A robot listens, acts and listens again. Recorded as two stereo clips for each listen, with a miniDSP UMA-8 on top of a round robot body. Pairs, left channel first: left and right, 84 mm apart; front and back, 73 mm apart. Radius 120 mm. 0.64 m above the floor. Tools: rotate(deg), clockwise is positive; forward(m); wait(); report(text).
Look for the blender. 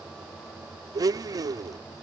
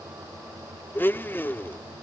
rotate(55)
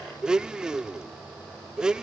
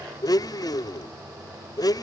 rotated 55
rotate(10)
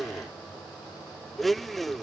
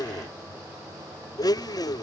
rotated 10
report("Facing the blender.")